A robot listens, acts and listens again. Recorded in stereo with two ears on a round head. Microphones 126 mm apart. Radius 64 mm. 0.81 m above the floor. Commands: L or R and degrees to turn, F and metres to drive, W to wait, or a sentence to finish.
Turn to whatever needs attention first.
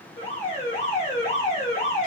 L55
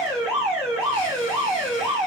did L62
Facing the alarm.